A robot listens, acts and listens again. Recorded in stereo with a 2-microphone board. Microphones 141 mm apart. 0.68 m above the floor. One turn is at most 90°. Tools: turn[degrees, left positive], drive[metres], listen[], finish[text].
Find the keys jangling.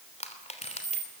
Thought: The keys jangling: about 60° right or 120° right.
Action: turn[-60]
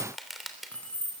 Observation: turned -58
Thought: So it is at 10° left.
Action: turn[10]
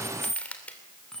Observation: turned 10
Action: finish[Found it: keys jangling, straight ahead.]